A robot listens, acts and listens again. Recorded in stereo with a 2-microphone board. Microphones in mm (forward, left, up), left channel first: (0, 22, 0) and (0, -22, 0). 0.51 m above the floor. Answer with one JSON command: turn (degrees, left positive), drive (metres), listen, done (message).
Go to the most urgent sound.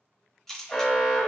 {"turn": 25}
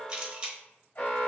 {"turn": 125}
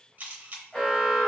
{"drive": 1.0}
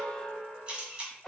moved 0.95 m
{"turn": 10}
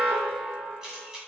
{"drive": 1.0}
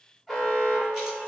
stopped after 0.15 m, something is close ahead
{"done": "Arrived at the alarm, straight ahead."}